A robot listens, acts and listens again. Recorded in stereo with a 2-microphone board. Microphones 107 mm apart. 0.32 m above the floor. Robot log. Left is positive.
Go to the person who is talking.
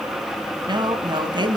note: The woman speaking: about 45° right or 135° right.
cmd yaw -45
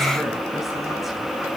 cmd idle
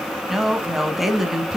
cmd fwd 1.0
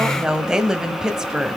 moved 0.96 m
note: The woman speaking is now 10° right.
cmd yaw -10
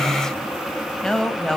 cmd fwd 1.0
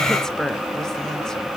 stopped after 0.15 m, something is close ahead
end: Arrived at the woman speaking, straight ahead.